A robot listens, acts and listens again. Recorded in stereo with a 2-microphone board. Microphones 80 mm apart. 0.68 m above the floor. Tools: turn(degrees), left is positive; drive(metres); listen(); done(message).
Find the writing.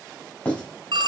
turn(degrees=25)
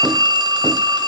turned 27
listen()
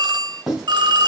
done("Facing the writing, over 4 m away.")